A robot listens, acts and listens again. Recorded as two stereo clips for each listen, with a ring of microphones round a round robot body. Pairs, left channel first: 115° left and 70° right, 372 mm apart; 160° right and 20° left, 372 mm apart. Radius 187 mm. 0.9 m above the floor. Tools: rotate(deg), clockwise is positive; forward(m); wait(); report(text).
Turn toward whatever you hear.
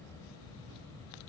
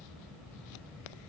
wait()
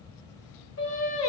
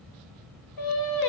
rotate(-170)
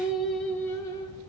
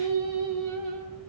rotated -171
rotate(-35)
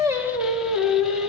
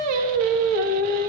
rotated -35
rotate(-20)
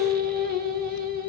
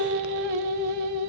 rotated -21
report("Facing the singing.")